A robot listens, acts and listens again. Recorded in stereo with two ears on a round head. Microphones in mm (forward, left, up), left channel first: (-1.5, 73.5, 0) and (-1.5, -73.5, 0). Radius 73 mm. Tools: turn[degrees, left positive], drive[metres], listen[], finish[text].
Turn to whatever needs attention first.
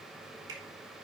Action: listen[]
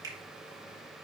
Action: listen[]
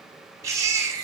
Thought: The baby crying: about 20° right or 160° right.
Action: turn[-20]
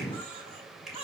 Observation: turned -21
Thought: So it is at 135° right.
Action: turn[-135]
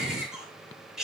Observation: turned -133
Action: finish[Found it: a baby crying, straight ahead.]